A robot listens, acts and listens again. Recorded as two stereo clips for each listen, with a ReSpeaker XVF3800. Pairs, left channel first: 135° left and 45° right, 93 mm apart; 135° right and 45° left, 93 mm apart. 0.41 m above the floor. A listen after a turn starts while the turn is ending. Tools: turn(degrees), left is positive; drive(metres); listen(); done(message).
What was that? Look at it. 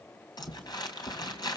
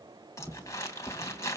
turn(degrees=170)
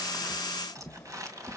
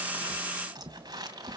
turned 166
done("Found it: crumpling, straight ahead.")